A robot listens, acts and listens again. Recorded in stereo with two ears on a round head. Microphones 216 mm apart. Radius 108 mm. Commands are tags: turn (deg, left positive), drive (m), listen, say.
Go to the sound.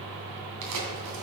<turn deg="-75"/>
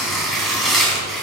<drive m="1.0"/>
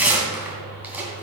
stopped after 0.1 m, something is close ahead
<say>Blocked. The tearing paper is further on, straight ahead.</say>